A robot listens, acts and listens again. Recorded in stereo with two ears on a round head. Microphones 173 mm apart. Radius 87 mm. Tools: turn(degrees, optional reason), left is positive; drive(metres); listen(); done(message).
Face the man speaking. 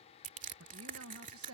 turn(degrees=-90)
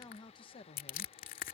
turn(degrees=30, reason="So it is at 30° left.")
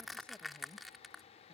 listen()
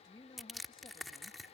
turn(degrees=20, reason="The man speaking is now 20° left.")
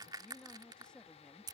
done("Found it: a man speaking, straight ahead.")